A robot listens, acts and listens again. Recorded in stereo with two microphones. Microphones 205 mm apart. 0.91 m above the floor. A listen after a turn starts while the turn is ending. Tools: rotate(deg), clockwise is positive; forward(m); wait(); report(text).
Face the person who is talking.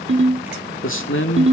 rotate(-90)
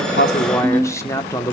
rotate(-15)
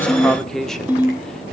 report("Facing the man speaking.")